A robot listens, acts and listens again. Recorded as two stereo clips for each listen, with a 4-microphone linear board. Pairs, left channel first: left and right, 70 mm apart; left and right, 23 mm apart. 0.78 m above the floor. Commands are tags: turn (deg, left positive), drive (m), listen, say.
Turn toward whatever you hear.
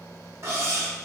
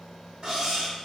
<turn deg="-40"/>
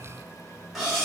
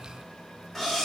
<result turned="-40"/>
<say>Found it: cutlery clinking, straight ahead.</say>